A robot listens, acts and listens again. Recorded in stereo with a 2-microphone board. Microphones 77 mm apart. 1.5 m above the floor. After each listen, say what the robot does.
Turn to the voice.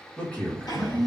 Turn 20° left.
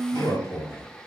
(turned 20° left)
Turn 140° left.
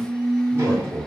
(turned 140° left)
Turn 10° left.
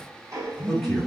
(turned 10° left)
Found it: a man speaking, straight ahead.